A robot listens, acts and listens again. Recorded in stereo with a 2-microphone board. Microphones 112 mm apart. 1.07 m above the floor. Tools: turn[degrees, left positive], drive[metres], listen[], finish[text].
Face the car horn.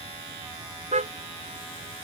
Action: turn[-90]
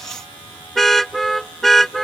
Action: finish[Facing the car horn.]